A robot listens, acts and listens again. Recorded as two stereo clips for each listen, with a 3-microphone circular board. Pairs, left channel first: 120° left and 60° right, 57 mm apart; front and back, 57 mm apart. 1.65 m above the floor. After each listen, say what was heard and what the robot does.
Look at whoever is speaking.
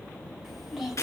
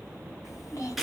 The child speaking: 25° left. Turn 25° left.
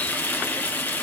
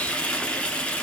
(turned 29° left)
Keep listening.
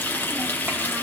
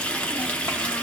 Keep listening.
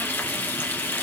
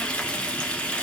I heard a child speaking from this way, but can't make it out now.